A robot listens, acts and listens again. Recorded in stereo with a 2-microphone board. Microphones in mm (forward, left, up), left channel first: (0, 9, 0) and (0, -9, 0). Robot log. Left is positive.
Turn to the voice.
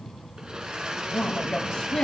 note: The woman speaking: about 60° left or 120° left.
cmd yaw +60
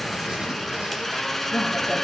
cmd idle
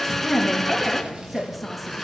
end: Found it: a woman speaking, straight ahead, over 4 m away.